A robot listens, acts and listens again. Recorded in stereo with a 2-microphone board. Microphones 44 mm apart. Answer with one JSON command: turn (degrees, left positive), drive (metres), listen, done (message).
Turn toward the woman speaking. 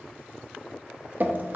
{"listen": true}
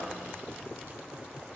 {"listen": true}
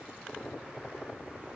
{"done": "I can't make out a woman speaking, only dripping."}